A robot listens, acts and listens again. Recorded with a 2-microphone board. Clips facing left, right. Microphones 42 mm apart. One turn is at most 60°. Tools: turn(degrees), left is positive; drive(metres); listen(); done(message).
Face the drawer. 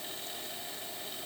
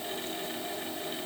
listen()
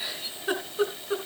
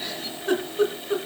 listen()
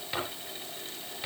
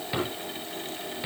turn(degrees=-30)
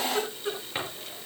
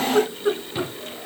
listen()
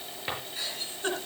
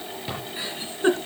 turn(degrees=25)
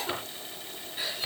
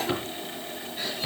listen()
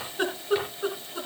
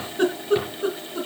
listen()
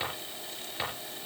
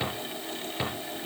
done("Facing the drawer.")